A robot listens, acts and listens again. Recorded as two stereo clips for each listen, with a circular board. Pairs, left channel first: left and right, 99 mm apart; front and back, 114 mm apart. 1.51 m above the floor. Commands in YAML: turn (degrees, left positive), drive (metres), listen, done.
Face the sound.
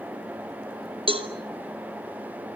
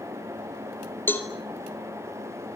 turn: -70
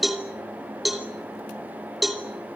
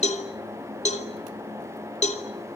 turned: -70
done: "Facing the cowbell."